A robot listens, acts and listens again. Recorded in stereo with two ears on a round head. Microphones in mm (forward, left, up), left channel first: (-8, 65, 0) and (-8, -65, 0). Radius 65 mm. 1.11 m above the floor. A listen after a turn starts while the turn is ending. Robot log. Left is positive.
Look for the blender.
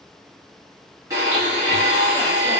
note: The blender: about 20° right or 160° right.
cmd yaw -20
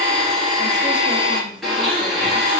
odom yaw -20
end: Found it: a blender, straight ahead, 1 to 2 m away.